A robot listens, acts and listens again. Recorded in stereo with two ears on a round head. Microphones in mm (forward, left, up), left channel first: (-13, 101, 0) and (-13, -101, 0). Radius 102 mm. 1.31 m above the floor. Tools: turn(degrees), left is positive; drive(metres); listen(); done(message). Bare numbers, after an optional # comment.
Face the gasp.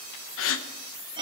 # The gasp: about 65° left or 115° left.
turn(65)
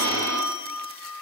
listen()
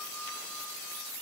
done("I heard a gasp, but can't make it out now. It was about straight ahead or 50° left.")